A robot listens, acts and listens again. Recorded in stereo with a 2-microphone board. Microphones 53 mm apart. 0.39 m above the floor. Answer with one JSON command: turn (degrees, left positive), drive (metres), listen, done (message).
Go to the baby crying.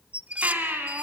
{"turn": -35}
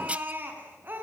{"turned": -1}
{"turn": -35}
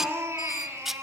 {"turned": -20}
{"turn": -125}
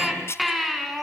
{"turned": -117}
{"drive": 1.0}
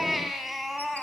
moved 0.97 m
{"drive": 1.0}
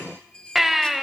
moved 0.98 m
{"drive": 1.0}
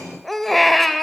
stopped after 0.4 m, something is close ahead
{"done": "I am next to the baby crying."}